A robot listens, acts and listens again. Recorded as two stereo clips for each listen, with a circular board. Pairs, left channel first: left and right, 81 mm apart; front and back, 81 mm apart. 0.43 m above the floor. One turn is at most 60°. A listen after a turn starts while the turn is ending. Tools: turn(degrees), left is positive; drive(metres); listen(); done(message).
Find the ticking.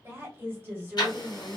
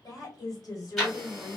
turn(degrees=60)
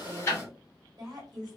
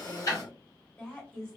turn(degrees=40)
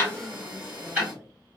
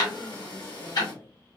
turn(degrees=-20)
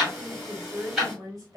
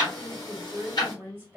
done("Found it: ticking, straight ahead, 1 to 2 m away.")